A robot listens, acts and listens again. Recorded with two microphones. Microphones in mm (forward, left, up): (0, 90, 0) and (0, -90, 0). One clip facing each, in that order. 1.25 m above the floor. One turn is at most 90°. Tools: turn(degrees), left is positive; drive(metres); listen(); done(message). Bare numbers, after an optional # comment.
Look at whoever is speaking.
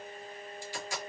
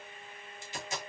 listen()
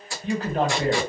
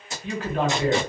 # The man speaking: about 35° left or 145° left.
turn(35)
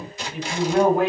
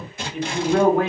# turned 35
done("Found it: a man speaking, straight ahead.")